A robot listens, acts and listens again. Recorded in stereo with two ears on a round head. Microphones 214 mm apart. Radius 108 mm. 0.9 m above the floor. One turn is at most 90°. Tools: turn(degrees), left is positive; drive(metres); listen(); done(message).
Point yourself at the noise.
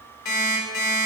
turn(degrees=90)
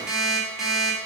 done("Facing the alarm clock.")